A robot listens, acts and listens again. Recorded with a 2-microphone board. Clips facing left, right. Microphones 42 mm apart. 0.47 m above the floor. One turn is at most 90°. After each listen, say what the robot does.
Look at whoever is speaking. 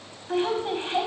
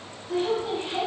Turn 40° left.
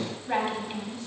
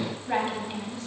Found it: a woman speaking, straight ahead.